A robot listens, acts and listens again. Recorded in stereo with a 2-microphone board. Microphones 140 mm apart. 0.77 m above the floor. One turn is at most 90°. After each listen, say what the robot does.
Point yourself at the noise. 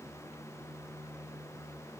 Keep listening.
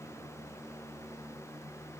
Keep listening.
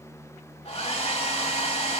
Turn 50° left.
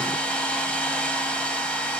Turn 10° left.
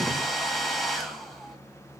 Found it: a hair dryer, straight ahead, under 1 m away.